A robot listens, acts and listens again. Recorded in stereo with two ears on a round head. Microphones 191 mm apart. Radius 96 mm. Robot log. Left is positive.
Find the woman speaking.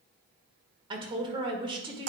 note: The woman speaking: about 25° right or 155° right.
cmd yaw -25
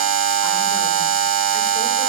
cmd idle
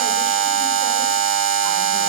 cmd idle
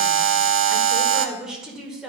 end: Found it: a woman speaking, straight ahead.